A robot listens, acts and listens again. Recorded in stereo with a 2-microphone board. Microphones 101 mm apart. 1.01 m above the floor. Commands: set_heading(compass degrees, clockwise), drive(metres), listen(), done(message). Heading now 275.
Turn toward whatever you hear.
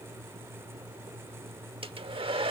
set_heading(335)
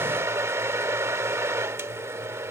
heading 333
set_heading(3)
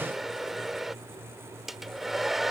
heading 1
done("Facing the hair dryer.")